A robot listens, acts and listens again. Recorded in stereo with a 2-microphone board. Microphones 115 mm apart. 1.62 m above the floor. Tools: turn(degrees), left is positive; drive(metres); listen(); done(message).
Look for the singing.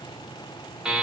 listen()
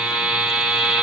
listen()
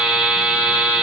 done("I can't make out singing to turn to.")